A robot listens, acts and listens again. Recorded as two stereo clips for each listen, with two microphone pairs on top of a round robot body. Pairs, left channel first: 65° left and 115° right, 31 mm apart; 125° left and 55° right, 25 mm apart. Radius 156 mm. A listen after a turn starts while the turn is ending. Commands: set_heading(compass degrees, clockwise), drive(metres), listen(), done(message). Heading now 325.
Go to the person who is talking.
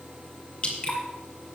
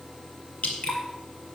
listen()
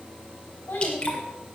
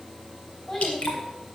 set_heading(265)
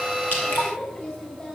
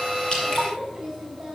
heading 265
set_heading(255)
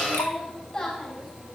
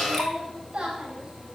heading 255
drive(1.0)
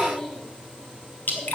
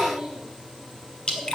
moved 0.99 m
drive(1.0)
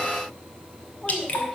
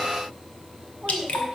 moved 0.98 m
drive(1.0)
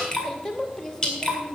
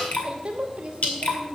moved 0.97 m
set_heading(265)
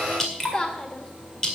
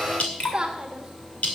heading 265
drive(1.0)
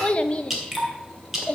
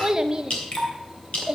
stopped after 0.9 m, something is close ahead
done("I am next to the child speaking.")